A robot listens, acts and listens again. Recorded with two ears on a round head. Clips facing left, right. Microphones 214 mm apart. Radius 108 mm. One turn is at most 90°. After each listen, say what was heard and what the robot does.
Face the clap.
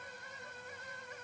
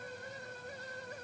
Keep listening.
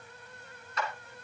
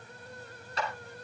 The clap: about 30° right or 150° right. Turn 30° right.
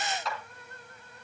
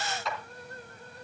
Found it: a clap, straight ahead.